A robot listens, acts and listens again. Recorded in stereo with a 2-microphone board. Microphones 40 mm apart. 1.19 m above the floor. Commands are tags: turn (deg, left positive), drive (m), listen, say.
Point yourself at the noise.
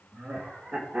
<turn deg="-40"/>
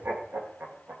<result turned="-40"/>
<turn deg="-105"/>
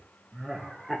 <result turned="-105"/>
<say>Facing the laughter, 1 to 2 m away.</say>